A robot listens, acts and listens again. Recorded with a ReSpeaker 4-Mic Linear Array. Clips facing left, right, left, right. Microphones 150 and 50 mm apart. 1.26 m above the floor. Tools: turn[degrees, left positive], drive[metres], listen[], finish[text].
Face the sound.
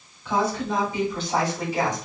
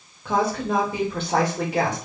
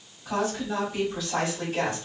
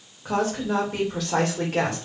Thought: The woman speaking: about 65° right or 115° right.
Action: turn[-65]
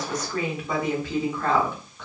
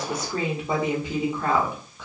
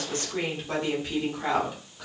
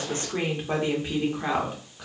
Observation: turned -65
Action: finish[Found it: a woman speaking, straight ahead.]